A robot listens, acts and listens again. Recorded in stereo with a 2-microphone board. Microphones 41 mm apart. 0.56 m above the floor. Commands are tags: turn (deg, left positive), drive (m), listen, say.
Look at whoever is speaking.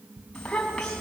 <turn deg="20"/>
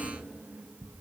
<listen/>
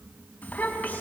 <turn deg="140"/>
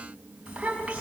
<turn deg="-30"/>
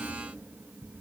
<listen/>
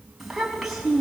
<say>Facing the child speaking, 2 to 4 m away.</say>